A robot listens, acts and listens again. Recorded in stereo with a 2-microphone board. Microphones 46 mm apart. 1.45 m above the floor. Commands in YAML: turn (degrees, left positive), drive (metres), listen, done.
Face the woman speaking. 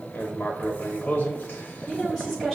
turn: 30
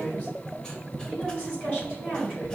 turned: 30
turn: 140
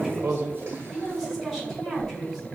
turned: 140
done: "Found it: a woman speaking, straight ahead."